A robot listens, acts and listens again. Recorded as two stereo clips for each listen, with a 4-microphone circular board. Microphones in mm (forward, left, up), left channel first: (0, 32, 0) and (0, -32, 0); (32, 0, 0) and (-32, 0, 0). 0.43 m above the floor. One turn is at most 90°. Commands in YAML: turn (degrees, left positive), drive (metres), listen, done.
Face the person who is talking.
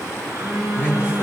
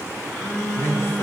turn: 45
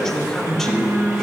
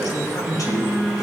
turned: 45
done: "Found it: a man speaking, straight ahead."